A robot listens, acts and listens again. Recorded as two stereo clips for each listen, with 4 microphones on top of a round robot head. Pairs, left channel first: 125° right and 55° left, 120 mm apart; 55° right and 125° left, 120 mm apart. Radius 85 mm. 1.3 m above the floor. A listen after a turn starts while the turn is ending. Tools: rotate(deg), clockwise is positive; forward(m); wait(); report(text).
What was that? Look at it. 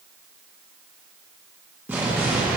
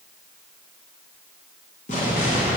rotate(20)
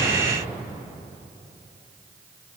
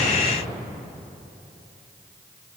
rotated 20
report("Facing the explosion, 1 to 2 m away.")